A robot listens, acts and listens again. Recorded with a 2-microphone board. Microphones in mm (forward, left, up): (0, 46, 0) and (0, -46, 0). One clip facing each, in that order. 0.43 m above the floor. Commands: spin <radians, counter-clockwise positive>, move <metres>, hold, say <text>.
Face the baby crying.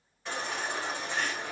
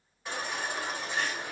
spin -0.52
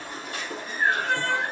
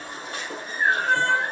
spin -2.44
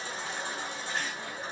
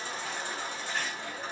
spin 0.52
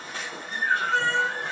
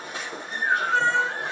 spin -0.35
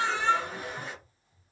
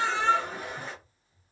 say Found it: a baby crying, straight ahead.